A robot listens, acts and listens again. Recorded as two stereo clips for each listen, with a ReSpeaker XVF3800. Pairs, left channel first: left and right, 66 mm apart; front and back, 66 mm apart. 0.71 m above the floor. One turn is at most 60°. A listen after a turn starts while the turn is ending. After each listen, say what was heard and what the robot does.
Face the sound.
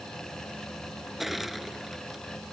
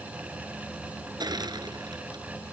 The crushing: 175° right. Turn 60° right.
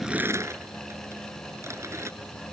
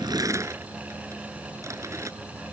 The crushing is now 135° right. Turn 60° right.
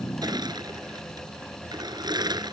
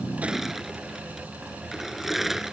The crushing is now 95° right. Turn 60° right.
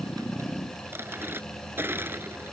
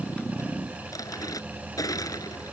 The crushing is now 30° right. Turn 30° right.
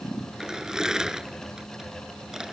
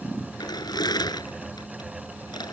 The crushing is now 10° right. Turn 10° right.
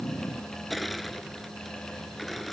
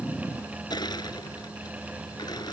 Found it: crushing, straight ahead.